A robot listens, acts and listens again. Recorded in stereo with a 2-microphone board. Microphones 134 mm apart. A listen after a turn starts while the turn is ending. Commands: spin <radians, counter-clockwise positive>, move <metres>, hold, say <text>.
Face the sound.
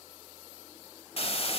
spin 0.79
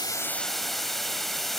say Facing the hiss.